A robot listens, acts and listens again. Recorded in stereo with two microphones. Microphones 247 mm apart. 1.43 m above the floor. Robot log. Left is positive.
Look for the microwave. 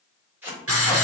cmd idle
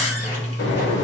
note: The microwave: about 50° left or 130° left.
cmd yaw +50
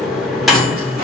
end: Found it: a microwave, straight ahead.